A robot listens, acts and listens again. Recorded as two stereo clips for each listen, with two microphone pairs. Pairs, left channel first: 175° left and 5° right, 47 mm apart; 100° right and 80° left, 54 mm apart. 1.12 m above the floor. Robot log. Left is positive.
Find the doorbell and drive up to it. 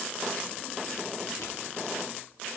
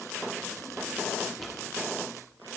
cmd idle
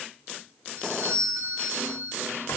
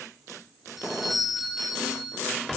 cmd fwd 1.0
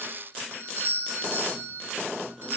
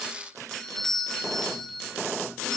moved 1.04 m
note: The doorbell is now 20° right.
cmd yaw -20
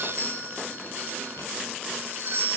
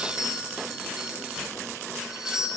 cmd fwd 1.0
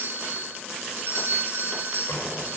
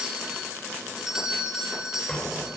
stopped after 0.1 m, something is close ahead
end: I am next to the doorbell.